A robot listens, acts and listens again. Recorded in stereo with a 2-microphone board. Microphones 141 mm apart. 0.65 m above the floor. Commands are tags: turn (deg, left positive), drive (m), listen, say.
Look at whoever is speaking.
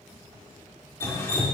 <listen/>
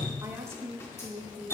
<turn deg="-20"/>
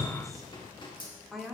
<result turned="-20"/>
<say>Found it: a woman speaking, straight ahead, 1 to 2 m away.</say>